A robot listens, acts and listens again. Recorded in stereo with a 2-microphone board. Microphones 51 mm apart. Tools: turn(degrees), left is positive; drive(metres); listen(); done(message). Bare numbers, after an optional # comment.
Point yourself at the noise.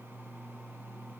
listen()
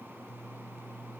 listen()
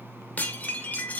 # The dishes clattering: about 35° left or 145° left.
turn(35)
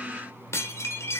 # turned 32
# So it is at 115° left.
turn(115)
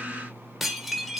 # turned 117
done("Facing the dishes clattering.")